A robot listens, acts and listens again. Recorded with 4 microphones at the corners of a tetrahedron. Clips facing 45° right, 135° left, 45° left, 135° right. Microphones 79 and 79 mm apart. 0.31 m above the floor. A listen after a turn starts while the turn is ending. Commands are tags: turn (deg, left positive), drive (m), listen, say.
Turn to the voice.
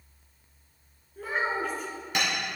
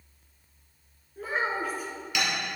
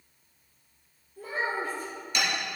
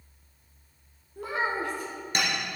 <turn deg="-140"/>
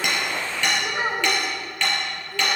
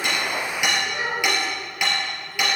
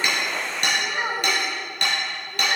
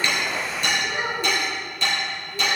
<turn deg="-10"/>
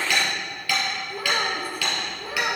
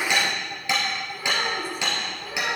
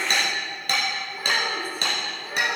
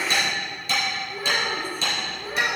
<turn deg="-35"/>
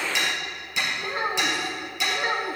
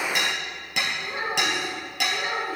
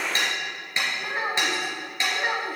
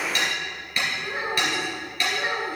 <say>Facing the child speaking.</say>